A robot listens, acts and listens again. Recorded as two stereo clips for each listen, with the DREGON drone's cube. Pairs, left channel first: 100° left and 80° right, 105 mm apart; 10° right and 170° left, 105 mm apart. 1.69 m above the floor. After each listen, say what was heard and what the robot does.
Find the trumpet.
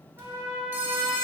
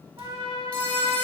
The trumpet: 140° right. Turn 140° right.
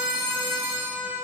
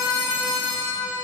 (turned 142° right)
Facing the trumpet.